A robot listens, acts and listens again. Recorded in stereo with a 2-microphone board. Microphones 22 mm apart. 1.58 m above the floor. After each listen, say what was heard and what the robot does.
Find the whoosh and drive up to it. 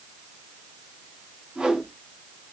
The whoosh: about 60° right or 120° right. Turn 60° right.
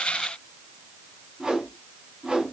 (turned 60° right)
So it is at 45° right. Turn 45° right.
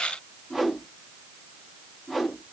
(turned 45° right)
Drive 1.0 m forward.
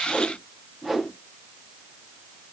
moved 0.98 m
Drive 1.0 m forward.
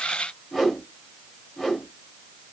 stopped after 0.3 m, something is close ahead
Arrived at the whoosh, straight ahead.